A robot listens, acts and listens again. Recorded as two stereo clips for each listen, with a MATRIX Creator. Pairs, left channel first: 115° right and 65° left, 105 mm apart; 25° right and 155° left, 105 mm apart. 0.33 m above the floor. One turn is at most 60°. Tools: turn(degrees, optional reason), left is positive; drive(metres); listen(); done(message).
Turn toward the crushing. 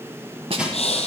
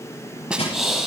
turn(degrees=-15, reason="The crushing: 15° right.")
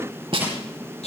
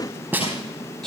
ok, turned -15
done("Found it: crushing, straight ahead.")